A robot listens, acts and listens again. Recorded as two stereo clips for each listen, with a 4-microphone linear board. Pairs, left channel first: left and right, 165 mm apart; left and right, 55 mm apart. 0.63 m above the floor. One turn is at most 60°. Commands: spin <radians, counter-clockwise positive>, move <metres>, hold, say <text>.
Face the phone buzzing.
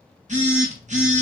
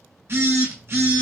spin -0.79
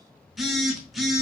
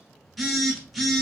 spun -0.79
say Found it: a phone buzzing, straight ahead.